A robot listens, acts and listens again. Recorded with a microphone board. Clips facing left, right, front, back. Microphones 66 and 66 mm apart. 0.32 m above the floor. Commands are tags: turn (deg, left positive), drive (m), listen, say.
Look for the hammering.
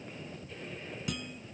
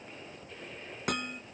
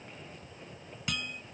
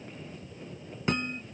<turn deg="-120"/>
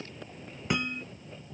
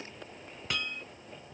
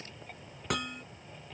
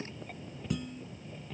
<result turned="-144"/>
<turn deg="20"/>
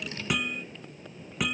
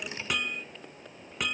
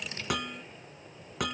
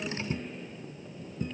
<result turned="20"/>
<say>Facing the hammering.</say>